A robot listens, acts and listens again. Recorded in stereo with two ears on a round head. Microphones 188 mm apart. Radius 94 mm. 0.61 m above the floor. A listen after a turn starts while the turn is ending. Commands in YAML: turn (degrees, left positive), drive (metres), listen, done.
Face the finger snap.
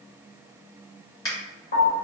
turn: 20
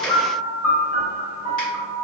listen: true
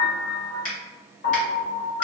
turn: 140
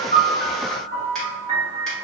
listen: true
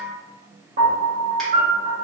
listen: true
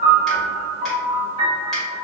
done: "I heard a finger snap from this way, but can't make it out now."